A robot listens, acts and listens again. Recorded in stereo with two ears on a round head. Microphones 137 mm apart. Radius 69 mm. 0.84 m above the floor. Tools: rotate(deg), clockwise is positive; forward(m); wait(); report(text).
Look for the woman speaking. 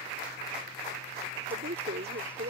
rotate(70)
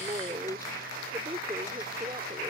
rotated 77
rotate(25)
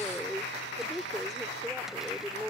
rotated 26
report("Found it: a woman speaking, straight ahead.")